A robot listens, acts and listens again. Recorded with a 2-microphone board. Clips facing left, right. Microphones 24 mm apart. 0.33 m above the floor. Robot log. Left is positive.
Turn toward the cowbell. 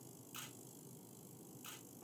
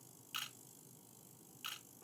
cmd idle
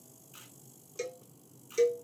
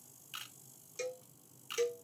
cmd yaw +30
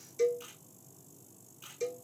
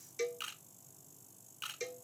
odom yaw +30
note: So it is at 30° right.
cmd yaw -30
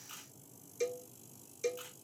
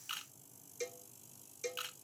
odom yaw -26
end: Facing the cowbell.